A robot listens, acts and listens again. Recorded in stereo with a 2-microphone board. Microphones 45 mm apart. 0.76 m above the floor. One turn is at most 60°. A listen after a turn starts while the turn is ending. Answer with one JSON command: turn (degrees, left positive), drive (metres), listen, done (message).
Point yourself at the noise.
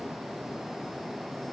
{"listen": true}
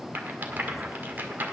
{"turn": -50}
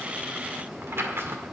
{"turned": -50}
{"turn": -60}
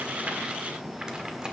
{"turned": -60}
{"turn": -15}
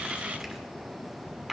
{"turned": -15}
{"turn": -10}
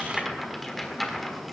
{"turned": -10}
{"done": "Found it: a rattle, straight ahead, 1 to 2 m away."}